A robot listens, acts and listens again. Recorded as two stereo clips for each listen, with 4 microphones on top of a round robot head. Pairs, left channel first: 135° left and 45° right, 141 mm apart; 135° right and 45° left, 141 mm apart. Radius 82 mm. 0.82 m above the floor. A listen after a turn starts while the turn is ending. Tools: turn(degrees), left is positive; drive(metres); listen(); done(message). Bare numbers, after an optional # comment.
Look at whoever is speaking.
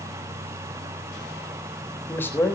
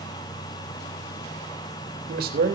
# The man speaking: 60° left.
turn(60)
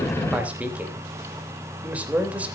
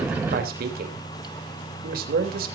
# The man speaking is now 35° left.
turn(35)
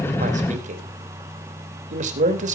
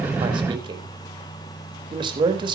# The man speaking is now 10° right.
turn(-10)
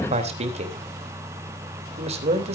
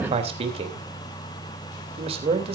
done("Facing the man speaking.")